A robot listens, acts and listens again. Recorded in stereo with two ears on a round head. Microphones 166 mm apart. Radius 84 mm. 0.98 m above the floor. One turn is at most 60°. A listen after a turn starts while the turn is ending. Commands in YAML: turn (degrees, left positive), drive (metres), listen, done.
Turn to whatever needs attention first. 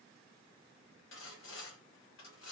listen: true
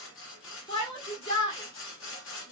turn: 30
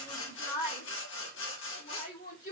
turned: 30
turn: 60
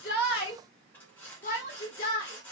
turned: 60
turn: 55
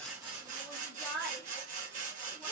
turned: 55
done: "Facing the shout, 1 to 2 m away."